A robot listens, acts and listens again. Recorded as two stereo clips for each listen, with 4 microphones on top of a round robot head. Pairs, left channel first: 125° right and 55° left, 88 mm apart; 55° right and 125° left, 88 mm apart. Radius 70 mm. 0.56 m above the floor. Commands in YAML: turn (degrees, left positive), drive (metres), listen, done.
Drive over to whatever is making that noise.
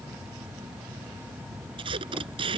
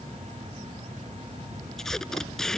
turn: 30
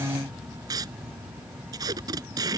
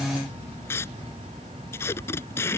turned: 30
drive: 1.0
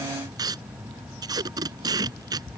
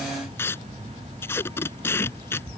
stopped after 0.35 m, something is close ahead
turn: 10
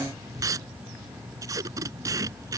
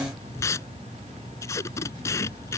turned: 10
done: "Something is in my way. I am facing the tape being pulled but have not reached it."